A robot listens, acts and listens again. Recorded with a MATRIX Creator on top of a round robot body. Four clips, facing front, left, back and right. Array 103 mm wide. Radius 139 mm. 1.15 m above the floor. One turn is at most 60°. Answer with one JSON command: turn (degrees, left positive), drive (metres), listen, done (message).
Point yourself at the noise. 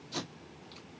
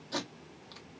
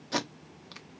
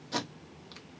{"turn": -60}
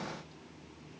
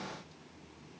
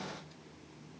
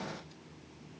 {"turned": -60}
{"turn": -60}
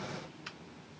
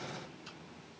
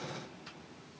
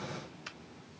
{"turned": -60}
{"turn": -50}
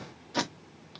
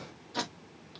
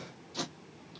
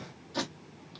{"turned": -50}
{"done": "Facing the tape being pulled, 1 to 2 m away."}